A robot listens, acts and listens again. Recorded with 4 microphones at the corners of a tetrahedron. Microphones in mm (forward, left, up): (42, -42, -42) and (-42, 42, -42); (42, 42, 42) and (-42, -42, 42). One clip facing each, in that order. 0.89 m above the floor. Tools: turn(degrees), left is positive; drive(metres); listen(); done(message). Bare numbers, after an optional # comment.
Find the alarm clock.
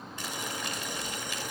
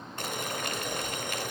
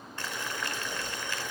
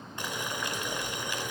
listen()
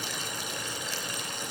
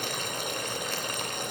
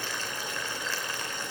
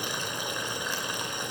listen()
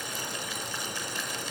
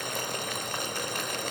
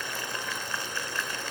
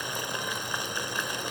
done("I can't make out an alarm clock, only boiling.")